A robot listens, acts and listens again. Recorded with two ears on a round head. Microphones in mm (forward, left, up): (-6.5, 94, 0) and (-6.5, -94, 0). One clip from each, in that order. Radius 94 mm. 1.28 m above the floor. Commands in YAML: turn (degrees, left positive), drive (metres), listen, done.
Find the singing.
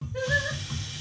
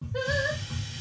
turn: -25
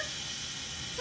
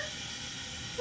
turn: 35
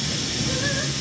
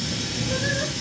listen: true
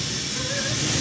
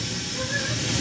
listen: true
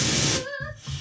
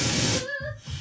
turn: 65
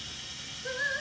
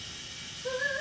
turn: 40
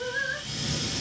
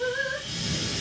turn: 20
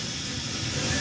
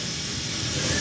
listen: true
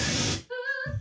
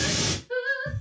done: "Found it: singing, straight ahead."